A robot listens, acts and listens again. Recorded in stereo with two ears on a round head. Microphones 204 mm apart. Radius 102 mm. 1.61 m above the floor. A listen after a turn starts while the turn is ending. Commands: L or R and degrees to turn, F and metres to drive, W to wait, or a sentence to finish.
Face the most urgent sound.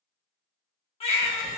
L25
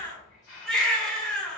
Found it: a baby crying, straight ahead, 1 to 2 m away.